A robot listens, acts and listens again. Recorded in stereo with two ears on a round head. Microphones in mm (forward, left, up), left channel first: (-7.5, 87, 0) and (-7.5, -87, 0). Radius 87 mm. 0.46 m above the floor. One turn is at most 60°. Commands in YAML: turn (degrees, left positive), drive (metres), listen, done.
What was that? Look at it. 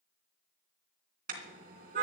turn: -45
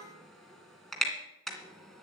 done: "Found it: a car horn, straight ahead."